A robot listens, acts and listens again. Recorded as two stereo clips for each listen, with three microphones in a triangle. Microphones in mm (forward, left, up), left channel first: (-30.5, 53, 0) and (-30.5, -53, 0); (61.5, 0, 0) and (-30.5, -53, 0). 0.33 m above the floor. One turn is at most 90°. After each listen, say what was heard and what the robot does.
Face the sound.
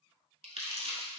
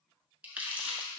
The crumpling: 75° right. Turn 75° right.
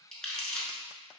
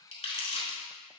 Facing the crumpling, 1 to 2 m away.